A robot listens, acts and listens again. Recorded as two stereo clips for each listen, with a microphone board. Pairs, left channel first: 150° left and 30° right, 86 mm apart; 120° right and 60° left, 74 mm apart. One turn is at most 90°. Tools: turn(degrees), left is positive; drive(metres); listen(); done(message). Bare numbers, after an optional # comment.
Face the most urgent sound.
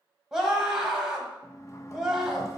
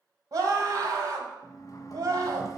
# The scream: 50° left.
turn(50)
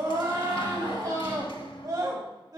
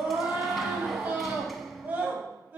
done("Found it: a scream, straight ahead, 1 to 2 m away.")